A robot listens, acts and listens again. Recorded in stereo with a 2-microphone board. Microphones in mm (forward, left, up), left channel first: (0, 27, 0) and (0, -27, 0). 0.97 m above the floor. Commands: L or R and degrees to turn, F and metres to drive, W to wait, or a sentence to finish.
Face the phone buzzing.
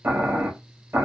W
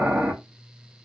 W
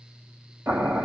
I can't make out a phone buzzing to turn to.